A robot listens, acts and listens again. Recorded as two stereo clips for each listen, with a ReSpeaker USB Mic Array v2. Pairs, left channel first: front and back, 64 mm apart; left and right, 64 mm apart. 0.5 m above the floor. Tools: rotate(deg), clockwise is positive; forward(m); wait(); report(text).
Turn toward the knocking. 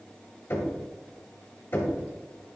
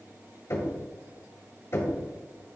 rotate(-45)
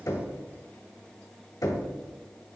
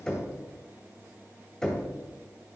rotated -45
rotate(-10)
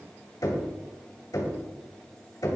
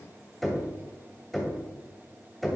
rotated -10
report("Found it: knocking, straight ahead.")